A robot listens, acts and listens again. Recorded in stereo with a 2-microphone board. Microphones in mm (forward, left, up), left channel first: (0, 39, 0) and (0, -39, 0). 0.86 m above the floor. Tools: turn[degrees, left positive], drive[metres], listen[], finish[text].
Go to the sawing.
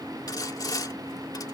Thought: The sawing: about 55° left or 125° left.
Action: turn[55]
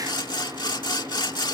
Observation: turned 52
Thought: So it is at 75° left.
Action: turn[75]
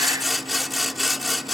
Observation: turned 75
Action: drive[1.0]
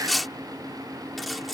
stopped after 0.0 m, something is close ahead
Action: finish[Something is in my way. I am facing the sawing but have not reached it.]